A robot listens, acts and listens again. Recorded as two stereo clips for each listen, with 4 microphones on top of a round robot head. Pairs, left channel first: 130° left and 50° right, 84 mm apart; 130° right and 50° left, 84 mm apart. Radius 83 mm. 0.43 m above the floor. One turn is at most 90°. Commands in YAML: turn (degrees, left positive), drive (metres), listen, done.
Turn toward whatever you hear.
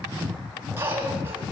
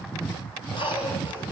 turn: -90
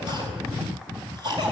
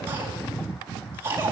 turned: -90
turn: -15
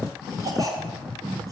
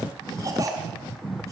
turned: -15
done: "Found it: a cough, straight ahead, over 4 m away."